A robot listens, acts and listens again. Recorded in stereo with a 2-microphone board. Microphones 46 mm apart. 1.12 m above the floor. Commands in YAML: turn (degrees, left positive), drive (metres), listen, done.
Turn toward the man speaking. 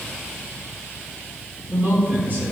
turn: -45
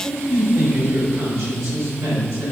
turn: -95
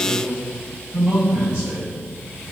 turn: -25
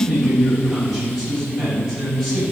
done: "Facing the man speaking, over 4 m away."